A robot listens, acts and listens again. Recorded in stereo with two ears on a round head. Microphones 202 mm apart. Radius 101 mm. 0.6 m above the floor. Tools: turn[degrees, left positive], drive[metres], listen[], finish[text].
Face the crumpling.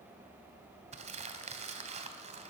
Thought: The crumpling: about 30° right or 150° right.
Action: turn[-30]
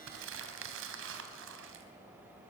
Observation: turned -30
Thought: So it is at 120° right.
Action: turn[-120]
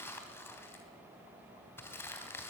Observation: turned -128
Thought: The crumpling is now 10° left.
Action: turn[10]
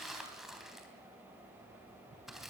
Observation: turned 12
Action: finish[Found it: crumpling, straight ahead.]